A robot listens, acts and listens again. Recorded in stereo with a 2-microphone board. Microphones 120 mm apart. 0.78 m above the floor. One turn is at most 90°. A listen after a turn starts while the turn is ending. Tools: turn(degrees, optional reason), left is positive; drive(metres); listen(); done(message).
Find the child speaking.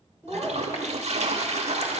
turn(degrees=20, reason="The child speaking: about 20° left or 160° left.")
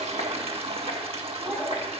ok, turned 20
turn(degrees=30)
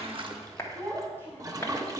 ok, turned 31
turn(degrees=-20, reason="So it is at 20° right.")
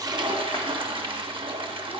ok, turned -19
listen()
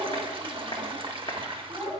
done("Found it: a child speaking, straight ahead.")